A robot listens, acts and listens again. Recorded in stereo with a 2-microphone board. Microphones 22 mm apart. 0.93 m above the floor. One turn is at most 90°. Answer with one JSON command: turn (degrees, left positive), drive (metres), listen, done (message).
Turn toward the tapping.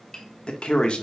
{"turn": 25}
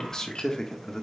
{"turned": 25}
{"listen": true}
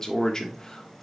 {"listen": true}
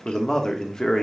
{"done": "I heard tapping, but can't make it out now. It was about straight ahead or 130° left."}